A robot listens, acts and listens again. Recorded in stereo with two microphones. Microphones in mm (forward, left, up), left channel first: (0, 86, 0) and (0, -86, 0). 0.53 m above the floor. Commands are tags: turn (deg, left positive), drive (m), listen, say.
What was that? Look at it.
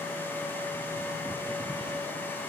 <listen/>
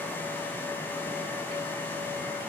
<listen/>
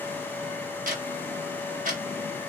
<turn deg="-50"/>
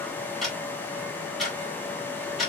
<say>Found it: ticking, straight ahead.</say>